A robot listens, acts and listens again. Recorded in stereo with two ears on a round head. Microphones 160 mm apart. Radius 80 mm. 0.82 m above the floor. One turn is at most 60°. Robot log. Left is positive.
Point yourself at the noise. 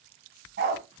note: The dog barking: about 60° right or 120° right.
cmd yaw -60
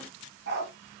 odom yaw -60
note: So it is at 60° right.
cmd yaw -60
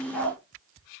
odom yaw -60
end: Facing the dog barking.